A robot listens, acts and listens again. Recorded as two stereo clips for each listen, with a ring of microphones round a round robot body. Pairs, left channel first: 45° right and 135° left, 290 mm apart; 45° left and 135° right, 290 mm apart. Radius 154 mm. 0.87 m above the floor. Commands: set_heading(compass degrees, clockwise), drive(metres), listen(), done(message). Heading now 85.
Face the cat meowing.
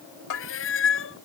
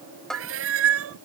set_heading(175)
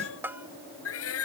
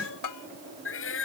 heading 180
done("Found it: a cat meowing, straight ahead.")